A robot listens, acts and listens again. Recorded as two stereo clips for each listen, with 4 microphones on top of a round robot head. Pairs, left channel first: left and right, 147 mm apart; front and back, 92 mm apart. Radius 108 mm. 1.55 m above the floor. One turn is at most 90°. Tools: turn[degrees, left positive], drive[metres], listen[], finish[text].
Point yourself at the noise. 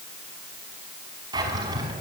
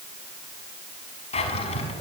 Thought: The drawer: 20° right.
Action: turn[-20]
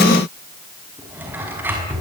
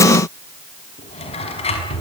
Thought: The drawer is now 10° right.
Action: turn[-10]
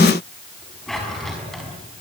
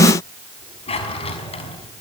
Action: finish[Facing the drawer.]